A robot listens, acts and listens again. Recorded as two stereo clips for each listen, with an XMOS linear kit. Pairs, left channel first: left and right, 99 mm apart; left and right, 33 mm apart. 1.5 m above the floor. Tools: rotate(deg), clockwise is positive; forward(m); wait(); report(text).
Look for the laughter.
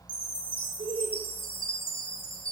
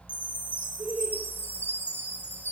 rotate(90)
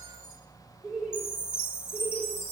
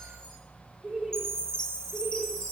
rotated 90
report("Found it: laughter, straight ahead.")